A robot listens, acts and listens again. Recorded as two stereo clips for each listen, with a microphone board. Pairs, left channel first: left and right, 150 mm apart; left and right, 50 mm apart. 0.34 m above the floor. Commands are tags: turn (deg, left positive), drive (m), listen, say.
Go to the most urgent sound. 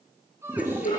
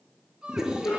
<turn deg="-15"/>
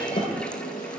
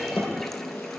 <listen/>
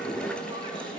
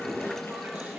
<listen/>
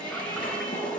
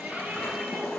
<say>I heard a shout, but can't make it out now. It was about straight ahead or 150° right. I did not reach it.</say>